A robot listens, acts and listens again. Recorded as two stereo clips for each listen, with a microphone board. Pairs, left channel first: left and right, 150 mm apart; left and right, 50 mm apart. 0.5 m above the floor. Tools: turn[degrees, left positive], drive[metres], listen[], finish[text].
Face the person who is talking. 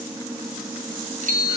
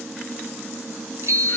Action: listen[]
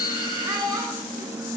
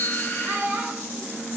Thought: The child speaking: about 20° right or 160° right.
Action: turn[-20]
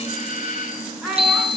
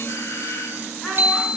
Action: finish[Found it: a child speaking, straight ahead.]